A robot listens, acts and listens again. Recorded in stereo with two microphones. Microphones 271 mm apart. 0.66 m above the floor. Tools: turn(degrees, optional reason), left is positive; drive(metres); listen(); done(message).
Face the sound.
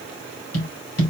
turn(degrees=65, reason="The tapping: about 65° left or 115° left.")
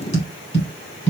turn(degrees=25, reason="So it is at 25° left.")
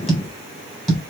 done("Facing the tapping, 2 to 4 m away.")